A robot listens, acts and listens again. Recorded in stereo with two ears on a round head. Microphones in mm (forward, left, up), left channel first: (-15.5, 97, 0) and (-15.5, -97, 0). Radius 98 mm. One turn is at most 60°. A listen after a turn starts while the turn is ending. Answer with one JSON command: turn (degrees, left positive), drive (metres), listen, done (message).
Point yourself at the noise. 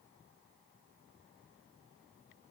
{"listen": true}
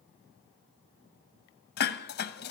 {"turn": 50}
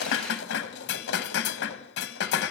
{"turn": 60}
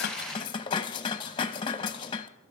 {"turn": 25}
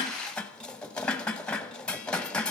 {"done": "Found it: dishes clattering, straight ahead."}